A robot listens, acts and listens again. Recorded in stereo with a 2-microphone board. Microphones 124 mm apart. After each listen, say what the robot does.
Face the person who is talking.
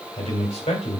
Turn 60° left.
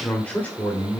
Turn 15° left.
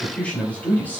Turn 15° left.
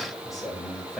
Found it: a man speaking, straight ahead, 2 to 4 m away.